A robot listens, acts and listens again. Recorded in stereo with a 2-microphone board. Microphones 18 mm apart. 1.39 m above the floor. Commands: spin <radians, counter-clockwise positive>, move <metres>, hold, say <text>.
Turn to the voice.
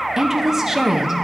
spin -0.52
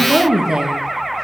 spin -2.09
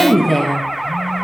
spin 0.35
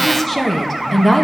spin 0.17
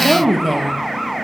say Facing the woman speaking, 1 to 2 m away.